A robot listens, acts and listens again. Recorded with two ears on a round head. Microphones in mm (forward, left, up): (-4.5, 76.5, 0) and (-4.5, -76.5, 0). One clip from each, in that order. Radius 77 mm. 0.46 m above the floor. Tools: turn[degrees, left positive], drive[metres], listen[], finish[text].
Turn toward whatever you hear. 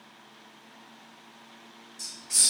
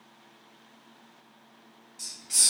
Action: turn[30]
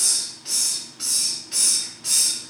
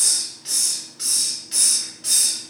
Thought: So it is at 30° right.
Action: turn[-30]
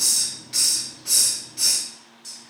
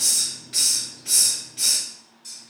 Thought: The hiss is now 10° left.
Action: turn[10]
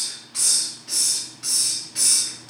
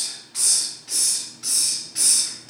Action: finish[Facing the hiss.]